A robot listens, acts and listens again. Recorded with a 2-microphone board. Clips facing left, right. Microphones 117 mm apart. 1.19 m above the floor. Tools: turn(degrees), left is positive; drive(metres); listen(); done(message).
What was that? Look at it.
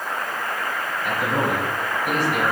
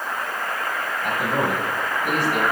turn(degrees=-50)
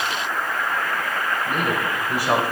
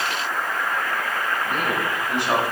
turn(degrees=10)
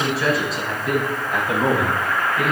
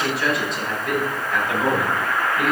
turn(degrees=10)
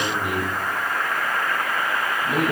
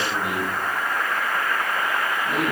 done("Found it: a man speaking, straight ahead, over 4 m away.")